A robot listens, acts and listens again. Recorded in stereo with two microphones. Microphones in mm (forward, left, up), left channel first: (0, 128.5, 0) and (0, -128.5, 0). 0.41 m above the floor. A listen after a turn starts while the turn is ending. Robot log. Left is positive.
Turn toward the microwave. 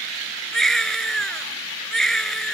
cmd idle
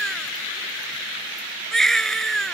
cmd idle
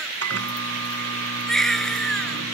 note: The microwave: about 70° right or 110° right.
cmd yaw -70
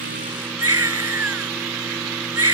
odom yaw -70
cmd idle
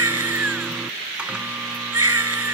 cmd idle
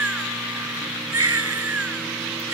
end: I heard a microwave, but can't make it out now. It was about straight ahead or 40° right.